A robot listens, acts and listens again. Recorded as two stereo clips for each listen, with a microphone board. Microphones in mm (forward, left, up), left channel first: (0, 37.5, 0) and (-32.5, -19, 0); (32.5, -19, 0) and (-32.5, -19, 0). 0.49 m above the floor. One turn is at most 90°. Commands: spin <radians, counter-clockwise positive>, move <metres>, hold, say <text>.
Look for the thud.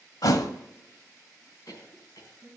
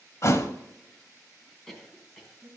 spin 0.70
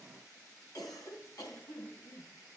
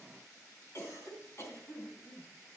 say I heard a thud from this way, but can't make it out now.